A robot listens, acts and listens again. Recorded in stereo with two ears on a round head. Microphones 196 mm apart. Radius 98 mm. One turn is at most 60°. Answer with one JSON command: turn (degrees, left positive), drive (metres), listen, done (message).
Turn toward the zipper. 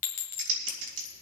{"listen": true}
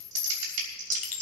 {"listen": true}
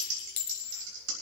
{"done": "I can't make out a zipper to turn to."}